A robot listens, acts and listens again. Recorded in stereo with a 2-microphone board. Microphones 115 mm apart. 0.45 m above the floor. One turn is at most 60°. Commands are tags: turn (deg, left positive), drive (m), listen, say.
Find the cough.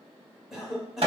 <turn deg="-30"/>
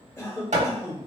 <turn deg="25"/>
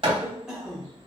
<say>Facing the cough, 1 to 2 m away.</say>